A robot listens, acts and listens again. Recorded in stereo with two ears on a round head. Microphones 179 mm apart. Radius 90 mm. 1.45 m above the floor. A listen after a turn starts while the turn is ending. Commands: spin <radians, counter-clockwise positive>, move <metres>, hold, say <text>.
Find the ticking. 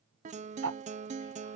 spin -1.31
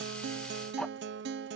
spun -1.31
hold
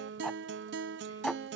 say Facing the ticking.